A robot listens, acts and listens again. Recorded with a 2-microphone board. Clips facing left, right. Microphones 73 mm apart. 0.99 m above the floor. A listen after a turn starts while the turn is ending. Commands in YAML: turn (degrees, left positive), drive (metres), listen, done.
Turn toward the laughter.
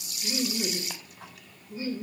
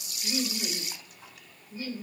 turn: 25
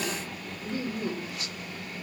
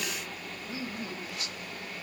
turn: 125
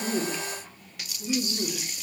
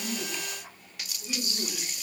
turn: 10
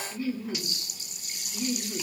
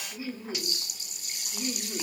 turn: -15
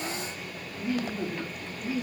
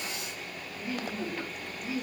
done: "Found it: laughter, straight ahead."